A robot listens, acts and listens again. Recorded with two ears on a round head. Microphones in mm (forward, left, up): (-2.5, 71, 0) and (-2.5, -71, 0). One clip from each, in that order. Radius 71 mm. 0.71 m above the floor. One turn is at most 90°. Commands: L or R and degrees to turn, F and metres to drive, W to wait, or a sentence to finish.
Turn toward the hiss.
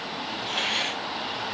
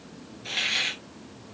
R70
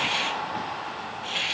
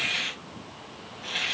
Found it: a hiss, straight ahead, 2 to 4 m away.